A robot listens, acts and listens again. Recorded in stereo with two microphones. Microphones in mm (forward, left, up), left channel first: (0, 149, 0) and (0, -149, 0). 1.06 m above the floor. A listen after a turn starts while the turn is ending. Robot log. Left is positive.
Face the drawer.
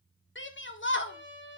cmd idle
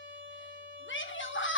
cmd idle
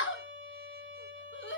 end: I can't make out a drawer to turn to.